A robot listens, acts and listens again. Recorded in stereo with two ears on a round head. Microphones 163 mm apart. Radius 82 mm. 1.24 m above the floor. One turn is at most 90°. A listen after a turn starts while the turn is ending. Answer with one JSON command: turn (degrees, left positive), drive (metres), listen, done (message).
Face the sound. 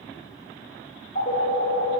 {"turn": 45}
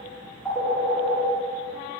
{"done": "Found it: a phone ringing, straight ahead, 2 to 4 m away."}